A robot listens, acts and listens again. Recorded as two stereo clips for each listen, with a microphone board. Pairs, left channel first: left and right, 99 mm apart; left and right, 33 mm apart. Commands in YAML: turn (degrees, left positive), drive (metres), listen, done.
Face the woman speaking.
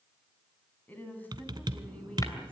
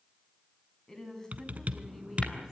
turn: 30
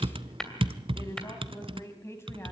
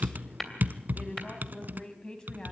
turn: 25
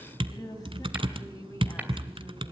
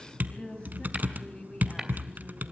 turn: 145
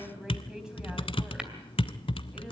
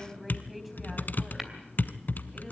done: "Found it: a woman speaking, straight ahead."